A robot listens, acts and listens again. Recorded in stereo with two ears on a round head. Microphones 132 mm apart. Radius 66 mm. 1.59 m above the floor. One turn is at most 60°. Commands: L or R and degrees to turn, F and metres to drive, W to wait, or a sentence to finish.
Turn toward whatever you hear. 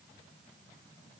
W
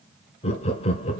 L40
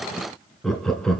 Facing the laughter.